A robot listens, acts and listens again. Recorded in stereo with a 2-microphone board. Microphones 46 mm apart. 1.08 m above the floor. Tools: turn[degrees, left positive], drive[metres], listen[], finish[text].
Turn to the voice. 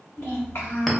Thought: The child speaking: about 70° left or 110° left.
Action: turn[70]
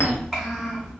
Action: finish[Facing the child speaking, 1 to 2 m away.]